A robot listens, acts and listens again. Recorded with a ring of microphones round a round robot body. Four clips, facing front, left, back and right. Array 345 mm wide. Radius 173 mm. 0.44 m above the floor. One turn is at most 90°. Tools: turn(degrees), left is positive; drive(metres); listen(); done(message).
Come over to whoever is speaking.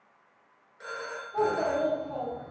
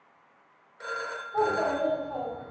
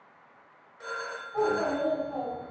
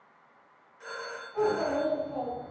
turn(degrees=45)
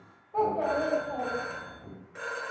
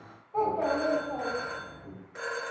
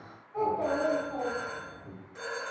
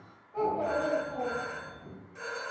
turn(degrees=15)
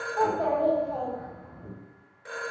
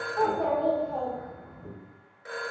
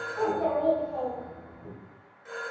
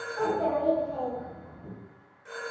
drive(metres=1.0)
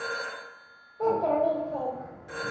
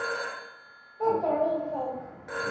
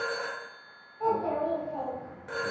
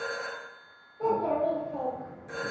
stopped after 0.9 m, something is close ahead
done("Arrived at the child speaking, straight ahead.")